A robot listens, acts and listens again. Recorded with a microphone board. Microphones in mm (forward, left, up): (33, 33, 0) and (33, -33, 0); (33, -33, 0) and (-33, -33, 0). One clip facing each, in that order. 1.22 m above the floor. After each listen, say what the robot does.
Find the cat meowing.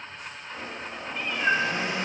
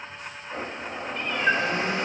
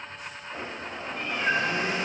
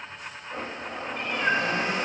Turn 175° left.
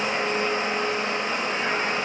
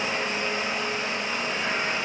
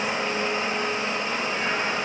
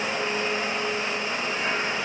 Keep listening.
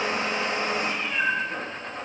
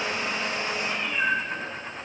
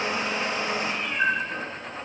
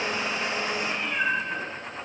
Turn 15° left.
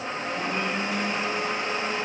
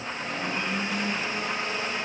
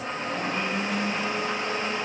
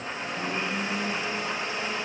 Keep listening.
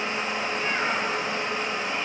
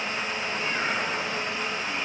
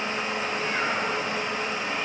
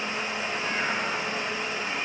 Keep listening.
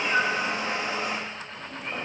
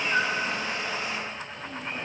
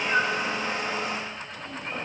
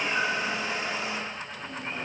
Found it: a cat meowing, straight ahead.